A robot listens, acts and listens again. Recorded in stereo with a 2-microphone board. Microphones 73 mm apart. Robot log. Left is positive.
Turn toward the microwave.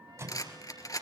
note: The microwave: about 45° right or 135° right.
cmd yaw -45
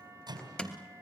note: So it is at 95° right.
cmd yaw -95
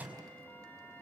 note: The microwave is now 20° right.
cmd yaw -20
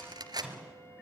end: Found it: a microwave, straight ahead.